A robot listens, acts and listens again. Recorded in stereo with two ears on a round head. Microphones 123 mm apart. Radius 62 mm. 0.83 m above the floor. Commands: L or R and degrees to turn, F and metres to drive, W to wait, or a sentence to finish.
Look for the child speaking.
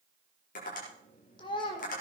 L40
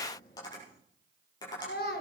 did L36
L95
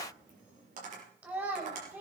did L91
R15
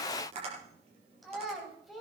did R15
Found it: a child speaking, straight ahead, 2 to 4 m away.